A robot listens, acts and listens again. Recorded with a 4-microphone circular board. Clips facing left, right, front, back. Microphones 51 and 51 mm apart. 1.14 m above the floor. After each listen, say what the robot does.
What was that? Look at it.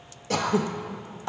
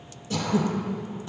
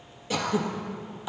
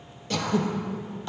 Turn 80° left.
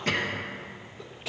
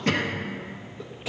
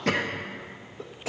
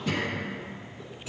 Facing the throat clearing.